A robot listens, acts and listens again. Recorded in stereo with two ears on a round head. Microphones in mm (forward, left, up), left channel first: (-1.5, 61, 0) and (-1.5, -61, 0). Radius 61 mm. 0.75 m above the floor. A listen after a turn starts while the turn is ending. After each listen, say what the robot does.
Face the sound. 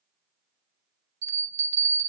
Turn 50° right.
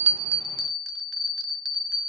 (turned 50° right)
Found it: a bell, straight ahead, under 1 m away.